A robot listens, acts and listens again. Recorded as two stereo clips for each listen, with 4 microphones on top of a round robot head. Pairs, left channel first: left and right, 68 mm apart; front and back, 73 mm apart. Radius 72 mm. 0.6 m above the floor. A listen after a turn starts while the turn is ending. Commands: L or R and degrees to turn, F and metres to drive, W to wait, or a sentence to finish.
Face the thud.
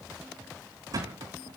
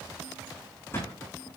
R60
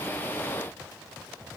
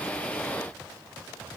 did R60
Facing where the thud came from. I can't hear it now.